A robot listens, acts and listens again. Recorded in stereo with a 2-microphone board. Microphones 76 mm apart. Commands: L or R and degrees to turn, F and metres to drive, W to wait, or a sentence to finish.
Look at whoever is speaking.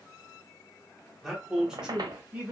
R15
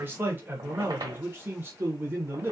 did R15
R25
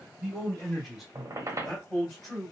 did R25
Found it: a man speaking, straight ahead.